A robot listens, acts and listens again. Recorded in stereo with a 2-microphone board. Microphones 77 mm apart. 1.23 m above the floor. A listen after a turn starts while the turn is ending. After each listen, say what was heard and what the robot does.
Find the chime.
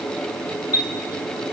The chime: about 25° right or 155° right. Turn 25° right.
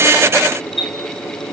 Facing the chime, 2 to 4 m away.